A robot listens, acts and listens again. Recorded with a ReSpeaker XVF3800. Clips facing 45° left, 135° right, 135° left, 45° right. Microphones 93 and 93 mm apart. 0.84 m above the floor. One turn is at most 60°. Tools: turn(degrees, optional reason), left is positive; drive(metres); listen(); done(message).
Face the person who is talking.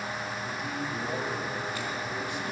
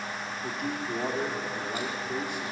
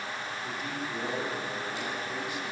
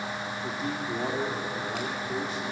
turn(degrees=-60, reason="The man speaking: 100° right.")
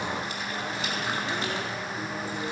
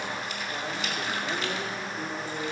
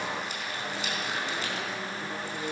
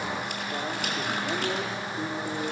turn(degrees=-50, reason="The man speaking is now 50° right.")
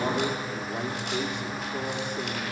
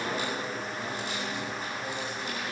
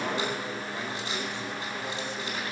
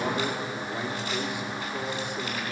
turn(degrees=30, reason="The man speaking is now 30° left.")
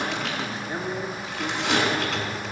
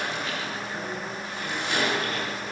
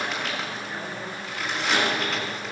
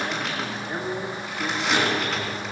done("Found it: a man speaking, straight ahead, 2 to 4 m away.")